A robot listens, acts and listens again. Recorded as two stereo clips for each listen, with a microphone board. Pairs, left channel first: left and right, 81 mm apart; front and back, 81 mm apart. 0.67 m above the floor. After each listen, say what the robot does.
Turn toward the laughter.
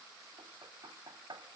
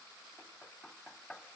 Keep listening.
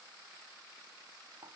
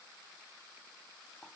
Keep listening.
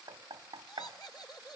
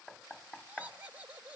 Turn 115° left.
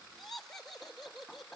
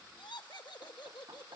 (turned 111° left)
Facing the laughter, 2 to 4 m away.